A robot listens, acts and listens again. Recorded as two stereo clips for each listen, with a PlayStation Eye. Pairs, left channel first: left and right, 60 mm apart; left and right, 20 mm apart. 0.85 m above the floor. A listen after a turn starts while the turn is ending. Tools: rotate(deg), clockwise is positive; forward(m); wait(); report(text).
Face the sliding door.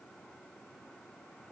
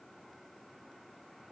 wait()
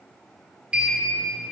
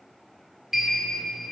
rotate(15)
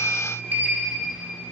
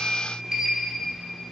rotate(150)
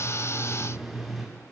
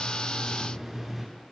report("Facing the sliding door.")